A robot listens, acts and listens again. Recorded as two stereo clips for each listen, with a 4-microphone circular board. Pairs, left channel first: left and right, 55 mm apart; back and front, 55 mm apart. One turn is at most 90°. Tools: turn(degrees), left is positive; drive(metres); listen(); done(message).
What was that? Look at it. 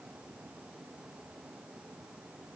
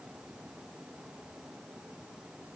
listen()
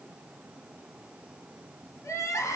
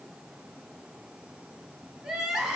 turn(degrees=80)
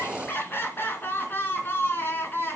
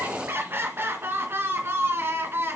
turn(degrees=40)
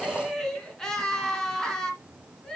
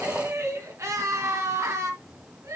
turn(degrees=10)
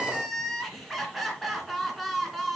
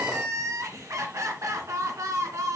done("Found it: crying, straight ahead.")